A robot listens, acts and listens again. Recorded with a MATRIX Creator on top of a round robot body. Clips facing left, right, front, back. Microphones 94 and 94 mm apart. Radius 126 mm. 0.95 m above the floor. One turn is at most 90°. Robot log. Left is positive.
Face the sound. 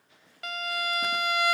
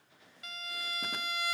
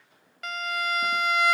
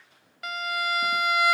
note: The violin: 95° left.
cmd yaw +90
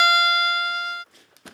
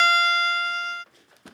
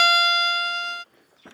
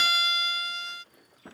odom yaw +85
note: The violin is now 10° left.
cmd yaw +10
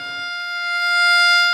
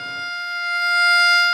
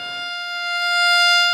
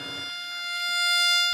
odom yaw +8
end: Found it: a violin, straight ahead.